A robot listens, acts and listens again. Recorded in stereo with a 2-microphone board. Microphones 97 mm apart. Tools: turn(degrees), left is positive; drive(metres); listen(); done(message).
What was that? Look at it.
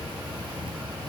listen()
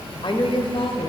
turn(degrees=70)
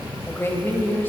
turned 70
turn(degrees=20)
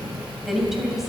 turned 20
done("Found it: a woman speaking, straight ahead, 2 to 4 m away.")